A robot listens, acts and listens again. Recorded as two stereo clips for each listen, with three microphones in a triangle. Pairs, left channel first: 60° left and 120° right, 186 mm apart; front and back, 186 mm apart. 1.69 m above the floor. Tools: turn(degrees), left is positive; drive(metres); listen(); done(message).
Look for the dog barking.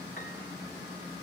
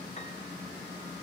listen()
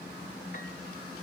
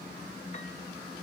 listen()
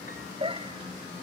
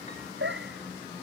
turn(degrees=180)
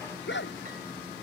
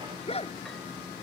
turn(degrees=55)
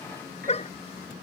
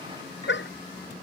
done("Facing the dog barking.")